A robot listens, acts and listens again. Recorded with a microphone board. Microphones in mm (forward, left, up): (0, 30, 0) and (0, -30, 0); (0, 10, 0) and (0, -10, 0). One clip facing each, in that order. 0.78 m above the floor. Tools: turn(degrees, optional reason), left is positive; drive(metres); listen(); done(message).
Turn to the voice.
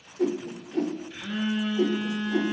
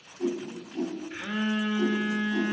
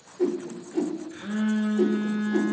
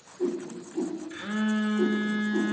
listen()
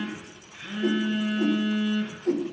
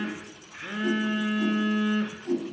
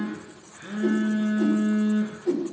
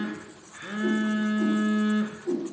listen()
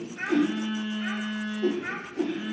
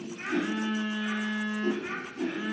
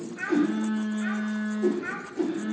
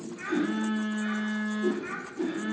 turn(degrees=60, reason="The child speaking: about 60° left or 120° left.")
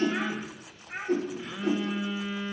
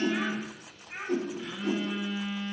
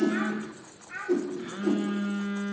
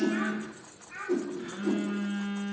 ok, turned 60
turn(degrees=65, reason="So it is at 65° left.")
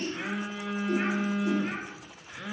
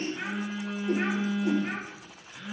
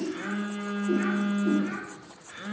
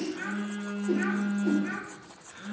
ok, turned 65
listen()
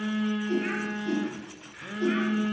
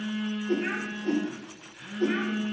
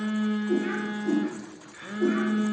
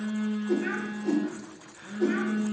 listen()
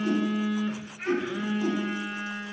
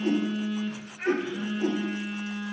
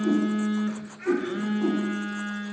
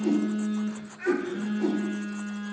done("Facing the child speaking.")